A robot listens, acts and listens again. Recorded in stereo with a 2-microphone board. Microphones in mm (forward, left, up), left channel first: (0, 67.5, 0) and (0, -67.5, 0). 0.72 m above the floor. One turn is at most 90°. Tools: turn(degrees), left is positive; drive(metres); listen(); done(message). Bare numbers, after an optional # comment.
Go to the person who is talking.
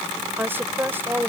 # The woman speaking: about 15° right or 165° right.
turn(-15)
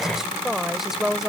drive(1.0)
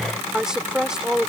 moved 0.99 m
drive(1.0)
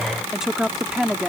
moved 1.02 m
drive(1.0)
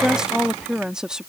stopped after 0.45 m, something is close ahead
done("I am next to the woman speaking.")